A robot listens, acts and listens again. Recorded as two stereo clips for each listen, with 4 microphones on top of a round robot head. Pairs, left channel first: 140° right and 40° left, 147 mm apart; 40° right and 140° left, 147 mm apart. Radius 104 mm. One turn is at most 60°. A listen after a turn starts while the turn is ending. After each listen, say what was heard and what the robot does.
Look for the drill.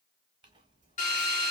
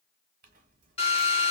The drill: 100° right. Turn 60° right.
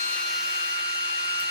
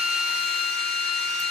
The drill is now 40° right. Turn 40° right.
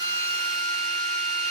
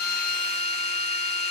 Found it: a drill, straight ahead.